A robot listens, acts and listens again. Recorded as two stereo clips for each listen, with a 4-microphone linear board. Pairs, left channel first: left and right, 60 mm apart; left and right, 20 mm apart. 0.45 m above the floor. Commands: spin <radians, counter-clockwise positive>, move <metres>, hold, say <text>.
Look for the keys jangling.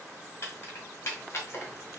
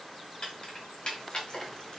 spin 0.79
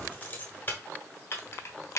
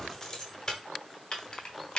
spin 0.87
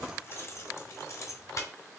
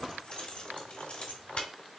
spin 1.05
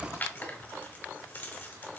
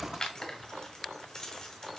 spin 0.52
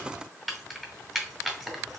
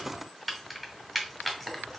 say Found it: keys jangling, straight ahead.